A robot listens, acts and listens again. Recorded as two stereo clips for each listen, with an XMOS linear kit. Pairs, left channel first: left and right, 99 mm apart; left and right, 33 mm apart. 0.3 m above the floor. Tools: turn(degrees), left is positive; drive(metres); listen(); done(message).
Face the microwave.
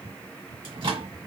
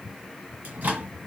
turn(degrees=-55)
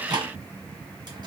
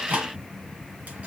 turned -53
turn(degrees=-55)
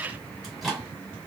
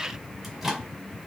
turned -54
done("Found it: a microwave, straight ahead.")